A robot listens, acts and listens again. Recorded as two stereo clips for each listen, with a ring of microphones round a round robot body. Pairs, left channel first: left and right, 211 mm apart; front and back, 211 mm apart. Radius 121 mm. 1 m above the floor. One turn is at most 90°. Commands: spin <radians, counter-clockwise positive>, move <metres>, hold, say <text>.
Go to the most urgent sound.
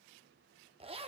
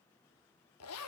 hold
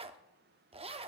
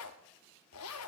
hold
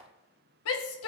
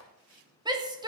spin 1.57
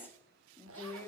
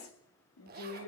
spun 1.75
spin 0.17
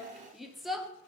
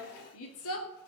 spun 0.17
move 1.0
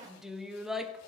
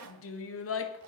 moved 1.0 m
move 1.0
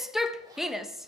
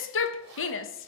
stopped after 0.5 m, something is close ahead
say Arrived at the shout, straight ahead.